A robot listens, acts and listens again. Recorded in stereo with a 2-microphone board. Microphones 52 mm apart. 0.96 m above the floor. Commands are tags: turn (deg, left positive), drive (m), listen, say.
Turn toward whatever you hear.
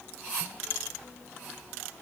<listen/>
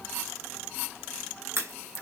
<turn deg="-60"/>
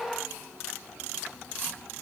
<listen/>
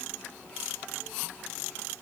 <say>I heard a crack, but can't make it out now. It was about straight ahead or 60° right.</say>